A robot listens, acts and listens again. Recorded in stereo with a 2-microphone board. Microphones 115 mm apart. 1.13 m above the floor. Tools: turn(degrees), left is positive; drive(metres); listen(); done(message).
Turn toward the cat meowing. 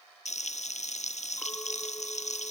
listen()
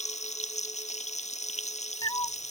turn(degrees=40)
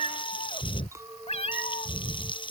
turn(degrees=95)
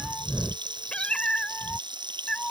turn(degrees=10)
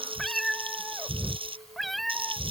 done("Facing the cat meowing.")